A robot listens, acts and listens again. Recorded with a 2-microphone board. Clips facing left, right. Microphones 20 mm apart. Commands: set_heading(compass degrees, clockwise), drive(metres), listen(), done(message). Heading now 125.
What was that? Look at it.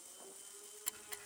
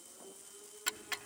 set_heading(170)
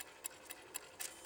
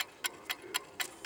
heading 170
set_heading(260)
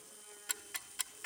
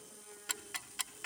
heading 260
set_heading(275)
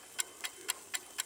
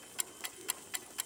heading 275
set_heading(265)
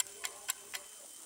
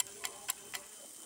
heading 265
done("Facing the ticking.")